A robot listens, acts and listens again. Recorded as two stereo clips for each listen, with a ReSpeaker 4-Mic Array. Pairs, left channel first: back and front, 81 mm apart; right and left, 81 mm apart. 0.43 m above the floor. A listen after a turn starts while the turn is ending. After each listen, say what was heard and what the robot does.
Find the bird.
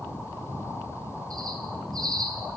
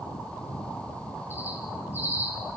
The bird: 25° left. Turn 25° left.
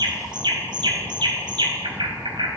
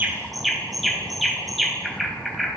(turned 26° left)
Facing the bird, 2 to 4 m away.